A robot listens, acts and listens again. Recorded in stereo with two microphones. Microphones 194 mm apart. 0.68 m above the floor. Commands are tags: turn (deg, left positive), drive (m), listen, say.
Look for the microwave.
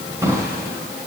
<listen/>
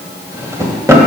<listen/>
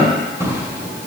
<say>I can't make out a microwave to turn to.</say>